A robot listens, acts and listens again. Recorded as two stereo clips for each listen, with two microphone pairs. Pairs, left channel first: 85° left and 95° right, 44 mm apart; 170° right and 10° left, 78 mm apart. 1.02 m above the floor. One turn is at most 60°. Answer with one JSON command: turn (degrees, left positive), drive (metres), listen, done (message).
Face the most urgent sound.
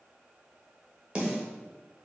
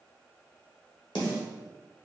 {"listen": true}
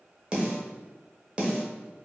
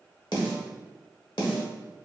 {"listen": true}
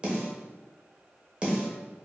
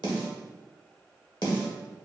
{"done": "I can't make out anything urgent to turn to."}